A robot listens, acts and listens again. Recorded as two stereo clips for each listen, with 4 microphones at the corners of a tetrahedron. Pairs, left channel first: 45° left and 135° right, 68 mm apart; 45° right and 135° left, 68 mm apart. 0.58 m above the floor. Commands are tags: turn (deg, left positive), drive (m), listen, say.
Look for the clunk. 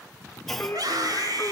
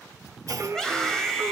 <turn deg="130"/>
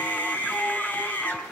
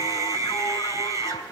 <say>Facing where the clunk came from. I can't hear it now.</say>